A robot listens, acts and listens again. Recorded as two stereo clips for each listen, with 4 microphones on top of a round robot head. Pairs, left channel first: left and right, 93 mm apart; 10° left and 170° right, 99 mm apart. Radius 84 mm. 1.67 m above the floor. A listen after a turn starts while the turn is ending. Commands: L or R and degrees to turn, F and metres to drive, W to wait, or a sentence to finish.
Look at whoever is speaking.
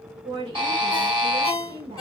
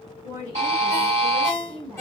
R115
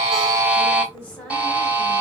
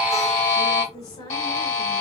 L20
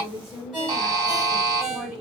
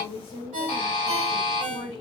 Facing the woman speaking.